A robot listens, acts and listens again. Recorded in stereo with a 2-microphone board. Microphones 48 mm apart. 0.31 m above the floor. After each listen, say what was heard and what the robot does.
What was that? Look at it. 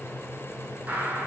The gunshot: about 25° right or 155° right. Turn 25° right.
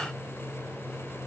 Keep listening.
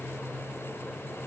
I heard a gunshot, but can't make it out now. It was about straight ahead or 130° right.